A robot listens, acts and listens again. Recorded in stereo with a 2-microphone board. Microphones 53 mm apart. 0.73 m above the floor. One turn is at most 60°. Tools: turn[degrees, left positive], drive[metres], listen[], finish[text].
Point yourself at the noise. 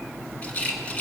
Thought: The rattle: about 30° left or 150° left.
Action: turn[30]
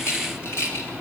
Thought: So it is at 115° left.
Action: turn[60]
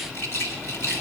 Thought: The rattle is now 65° left.
Action: turn[60]
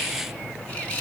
Thought: The rattle is now 30° left.
Action: turn[30]
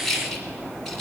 Thought: The rattle is now 10° left.
Action: turn[10]
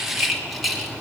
Action: finish[Found it: a rattle, straight ahead, 1 to 2 m away.]